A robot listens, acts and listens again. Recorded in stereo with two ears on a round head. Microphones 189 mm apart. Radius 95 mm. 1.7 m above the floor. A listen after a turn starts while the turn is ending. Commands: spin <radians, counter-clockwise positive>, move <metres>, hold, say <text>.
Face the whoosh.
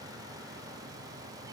hold
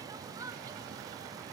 hold
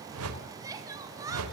spin -1.57
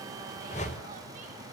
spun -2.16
spin 0.61
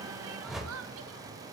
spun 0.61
say Found it: a whoosh, straight ahead.